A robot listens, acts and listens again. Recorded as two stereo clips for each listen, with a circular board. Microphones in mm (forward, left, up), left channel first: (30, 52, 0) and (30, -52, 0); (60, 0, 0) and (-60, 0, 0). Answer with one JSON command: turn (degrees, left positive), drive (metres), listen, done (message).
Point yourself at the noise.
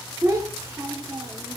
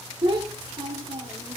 {"turn": -140}
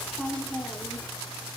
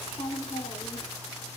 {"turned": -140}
{"done": "Facing the child speaking, under 1 m away."}